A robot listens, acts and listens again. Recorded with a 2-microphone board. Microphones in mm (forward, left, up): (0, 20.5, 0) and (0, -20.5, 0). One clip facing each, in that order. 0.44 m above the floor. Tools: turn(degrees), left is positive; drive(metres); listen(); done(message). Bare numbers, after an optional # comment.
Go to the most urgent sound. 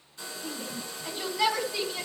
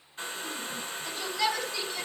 turn(30)
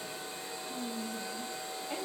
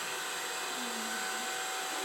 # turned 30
listen()
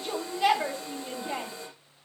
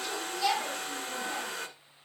# So it is at 140° left.
turn(140)
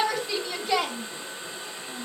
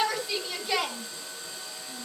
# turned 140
drive(1.0)
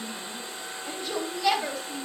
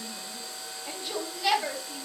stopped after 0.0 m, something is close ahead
done("Blocked. The shout is further on, straight ahead.")